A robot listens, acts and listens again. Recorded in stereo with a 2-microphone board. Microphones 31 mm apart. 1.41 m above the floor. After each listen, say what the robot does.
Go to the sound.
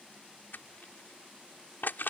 Turn 90° left.
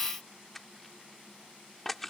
Drive 1.0 m forward.
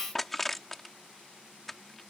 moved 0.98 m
Drive 1.0 m forward.
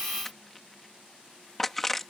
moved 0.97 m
Drive 1.0 m forward.
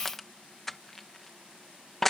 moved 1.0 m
Drive 1.0 m forward.
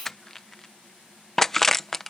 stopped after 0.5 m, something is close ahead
Turn 10° left.
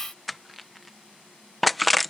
Arrived at the crushing, straight ahead.